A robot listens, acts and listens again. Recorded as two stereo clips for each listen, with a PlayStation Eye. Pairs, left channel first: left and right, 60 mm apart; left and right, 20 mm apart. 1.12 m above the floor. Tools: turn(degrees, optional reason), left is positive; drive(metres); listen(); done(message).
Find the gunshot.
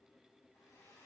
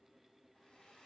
listen()
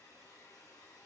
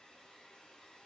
listen()
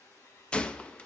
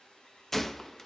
turn(degrees=15, reason="The gunshot: about 15° left or 165° left.")
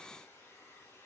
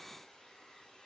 listen()
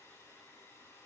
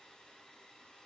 done("I heard a gunshot, but can't make it out now. It was about straight ahead or 150° left.")